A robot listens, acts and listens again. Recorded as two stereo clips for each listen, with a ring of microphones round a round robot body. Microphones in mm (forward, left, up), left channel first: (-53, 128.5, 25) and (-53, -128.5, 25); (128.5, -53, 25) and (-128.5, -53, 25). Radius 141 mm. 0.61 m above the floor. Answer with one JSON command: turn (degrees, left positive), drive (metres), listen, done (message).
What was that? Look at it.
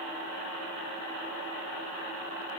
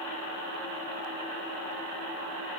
{"listen": true}
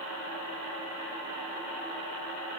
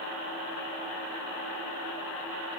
{"listen": true}
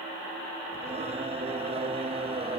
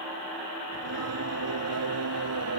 {"turn": -155}
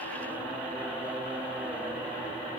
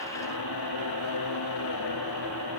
{"done": "Found it: singing, straight ahead."}